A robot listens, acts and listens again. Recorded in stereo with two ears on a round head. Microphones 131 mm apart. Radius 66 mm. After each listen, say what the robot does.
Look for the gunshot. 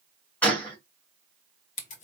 Turn 30° left.
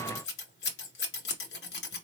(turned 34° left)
Keep listening.
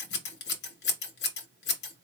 I heard a gunshot, but can't make it out now. It was about 25° right or 135° left.